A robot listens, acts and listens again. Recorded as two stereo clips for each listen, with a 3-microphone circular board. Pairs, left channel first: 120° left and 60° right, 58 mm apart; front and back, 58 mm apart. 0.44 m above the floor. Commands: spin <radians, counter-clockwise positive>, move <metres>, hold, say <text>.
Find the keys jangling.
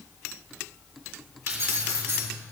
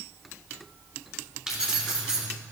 spin -1.75
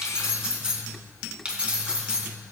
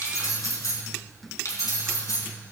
spin 0.17
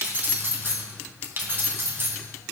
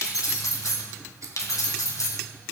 spin -0.17
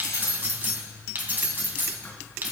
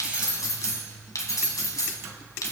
say Facing the keys jangling.